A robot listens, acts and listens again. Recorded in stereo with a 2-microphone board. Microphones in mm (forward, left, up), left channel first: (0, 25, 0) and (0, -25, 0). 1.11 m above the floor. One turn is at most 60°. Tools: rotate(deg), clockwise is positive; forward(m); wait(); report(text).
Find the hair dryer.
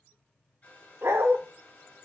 rotate(-30)
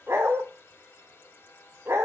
rotate(-60)
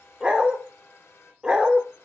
rotate(-60)
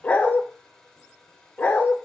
report("Facing the hair dryer, over 4 m away.")